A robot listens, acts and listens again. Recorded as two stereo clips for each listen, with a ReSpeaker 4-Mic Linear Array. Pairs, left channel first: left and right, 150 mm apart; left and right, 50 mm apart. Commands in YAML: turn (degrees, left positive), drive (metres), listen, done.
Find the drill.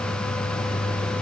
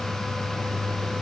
listen: true
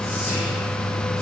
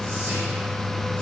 listen: true
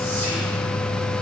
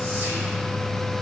done: "I can't make out a drill."